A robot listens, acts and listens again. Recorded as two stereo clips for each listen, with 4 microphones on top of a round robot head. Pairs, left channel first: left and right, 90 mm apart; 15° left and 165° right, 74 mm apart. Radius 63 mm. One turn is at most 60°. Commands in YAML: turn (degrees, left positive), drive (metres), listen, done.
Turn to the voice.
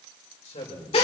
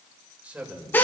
turn: 60
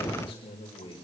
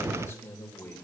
turn: 60
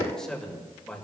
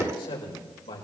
turn: 10
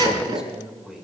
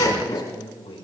done: "Found it: a man speaking, straight ahead, over 4 m away."